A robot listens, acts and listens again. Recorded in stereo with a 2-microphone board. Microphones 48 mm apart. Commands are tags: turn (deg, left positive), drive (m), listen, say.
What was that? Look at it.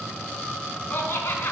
<turn deg="55"/>
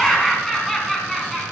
<say>Found it: laughter, straight ahead, 2 to 4 m away.</say>